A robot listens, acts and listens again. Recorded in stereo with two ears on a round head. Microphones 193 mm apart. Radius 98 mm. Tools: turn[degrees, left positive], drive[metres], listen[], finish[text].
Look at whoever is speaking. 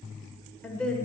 Action: turn[30]
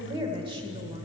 Thought: So it is at 25° right.
Action: turn[-25]
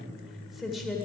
Action: finish[Found it: a woman speaking, straight ahead, 1 to 2 m away.]